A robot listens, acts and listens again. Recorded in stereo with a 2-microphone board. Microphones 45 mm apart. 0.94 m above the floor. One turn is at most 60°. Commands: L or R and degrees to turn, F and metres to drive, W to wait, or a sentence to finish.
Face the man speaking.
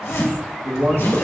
R60
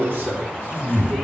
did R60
R40
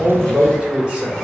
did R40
R15
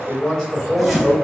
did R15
Facing the man speaking.